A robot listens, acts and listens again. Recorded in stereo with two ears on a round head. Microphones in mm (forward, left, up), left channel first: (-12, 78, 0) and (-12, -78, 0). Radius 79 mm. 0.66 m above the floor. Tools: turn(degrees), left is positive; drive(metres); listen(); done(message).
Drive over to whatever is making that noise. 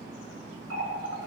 turn(degrees=-90)
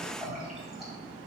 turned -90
drive(metres=1.0)
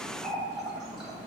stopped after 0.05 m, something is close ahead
done("Blocked. The running tap is further on, straight ahead.")